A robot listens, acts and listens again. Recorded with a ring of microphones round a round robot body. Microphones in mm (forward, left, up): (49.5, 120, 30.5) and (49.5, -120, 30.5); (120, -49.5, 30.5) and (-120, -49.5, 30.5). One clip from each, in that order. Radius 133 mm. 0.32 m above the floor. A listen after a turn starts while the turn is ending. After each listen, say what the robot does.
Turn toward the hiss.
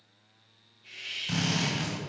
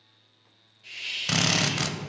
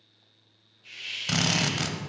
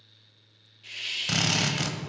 Turn 150° right.
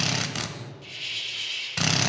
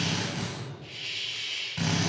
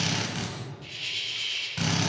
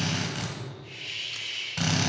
Turn 35° left.
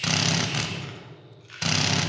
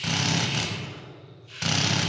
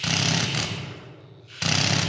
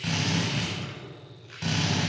Keep listening.
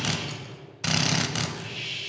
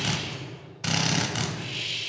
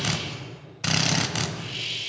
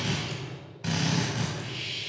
Turn 45° right.
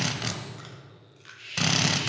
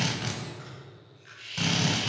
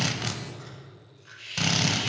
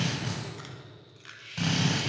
Turn 10° right.
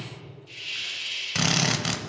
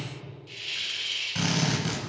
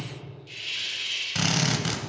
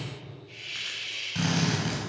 Found it: a hiss, straight ahead, 2 to 4 m away.